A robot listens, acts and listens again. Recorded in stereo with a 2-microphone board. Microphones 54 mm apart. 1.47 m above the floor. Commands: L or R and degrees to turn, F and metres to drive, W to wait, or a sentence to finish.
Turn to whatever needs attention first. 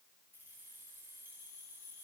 W
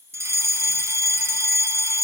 R60
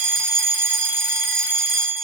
R45
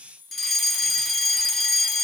Found it: a fire alarm, straight ahead, 2 to 4 m away.